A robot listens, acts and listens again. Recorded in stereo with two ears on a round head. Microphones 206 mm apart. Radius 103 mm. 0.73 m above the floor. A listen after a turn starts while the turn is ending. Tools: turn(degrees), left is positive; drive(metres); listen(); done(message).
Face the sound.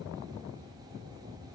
listen()
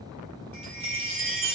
turn(degrees=-25)
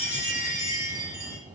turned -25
turn(degrees=-125)
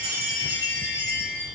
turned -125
turn(degrees=15)
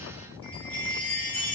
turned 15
turn(degrees=10)
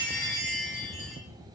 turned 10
done("Facing the chime, 1 to 2 m away.")